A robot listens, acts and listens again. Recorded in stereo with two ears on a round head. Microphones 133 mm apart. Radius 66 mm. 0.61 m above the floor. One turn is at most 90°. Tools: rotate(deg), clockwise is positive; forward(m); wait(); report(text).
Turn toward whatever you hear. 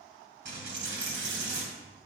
rotate(90)
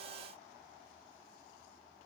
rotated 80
rotate(10)
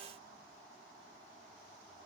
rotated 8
report("Facing where the dropped coin came from. I can't hear it now.")